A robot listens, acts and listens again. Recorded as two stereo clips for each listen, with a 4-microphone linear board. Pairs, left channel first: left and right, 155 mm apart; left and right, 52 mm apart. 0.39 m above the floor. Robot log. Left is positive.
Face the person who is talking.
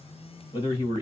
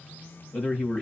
note: The man speaking: about 30° left or 150° left.
cmd yaw +30
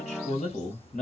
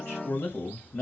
note: So it is at 115° left.
cmd yaw +115
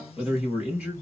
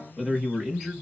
note: The man speaking is now 10° right.
cmd yaw -10
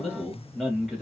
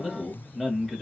end: Found it: a man speaking, straight ahead, 2 to 4 m away.